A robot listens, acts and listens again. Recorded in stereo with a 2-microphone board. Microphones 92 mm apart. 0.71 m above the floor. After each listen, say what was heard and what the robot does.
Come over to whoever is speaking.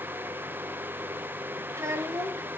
The child speaking: about 30° right or 150° right. Turn 30° right.
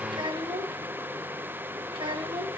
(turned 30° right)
So it is at 120° right. Turn 120° right.
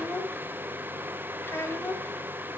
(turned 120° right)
The child speaking is now 25° left. Turn 25° left.
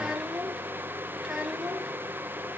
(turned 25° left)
Drive 1.0 m forward.
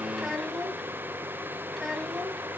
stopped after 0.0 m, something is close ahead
Something is in my way. I am facing the child speaking but have not reached it.